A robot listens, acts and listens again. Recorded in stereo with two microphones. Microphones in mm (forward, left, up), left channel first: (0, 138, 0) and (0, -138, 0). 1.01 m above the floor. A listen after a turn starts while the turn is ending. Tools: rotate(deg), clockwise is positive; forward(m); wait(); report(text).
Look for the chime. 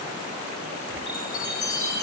rotate(-90)
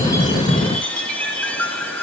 report("Found it: a chime, straight ahead.")